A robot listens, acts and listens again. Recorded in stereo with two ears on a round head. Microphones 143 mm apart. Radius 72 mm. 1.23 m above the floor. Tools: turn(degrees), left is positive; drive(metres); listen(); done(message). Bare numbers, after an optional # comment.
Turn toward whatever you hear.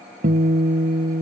# The guitar: about 50° right or 130° right.
turn(-50)
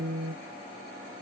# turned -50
# So it is at 80° right.
turn(-80)
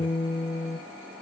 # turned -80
# The guitar is now 25° left.
turn(25)
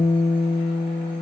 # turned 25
# The guitar is now 20° left.
turn(20)
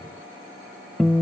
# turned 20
done("Found it: a guitar, straight ahead, 1 to 2 m away.")